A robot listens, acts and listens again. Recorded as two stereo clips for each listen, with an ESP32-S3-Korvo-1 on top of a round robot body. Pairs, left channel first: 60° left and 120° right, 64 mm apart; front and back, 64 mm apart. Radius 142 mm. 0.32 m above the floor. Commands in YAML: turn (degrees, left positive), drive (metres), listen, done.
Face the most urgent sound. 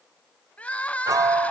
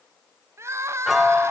turn: 130
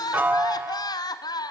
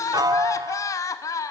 turn: 40
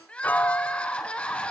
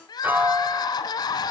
turn: -15
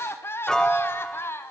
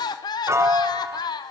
done: "Found it: crying, straight ahead, 1 to 2 m away."